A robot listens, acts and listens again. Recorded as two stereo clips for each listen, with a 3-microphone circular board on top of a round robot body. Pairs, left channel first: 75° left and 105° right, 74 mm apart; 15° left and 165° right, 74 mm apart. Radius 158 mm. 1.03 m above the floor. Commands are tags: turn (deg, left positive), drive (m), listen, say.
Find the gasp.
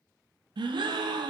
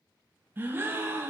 <turn deg="-100"/>
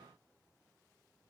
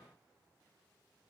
<say>I heard a gasp from this way, but can't make it out now.</say>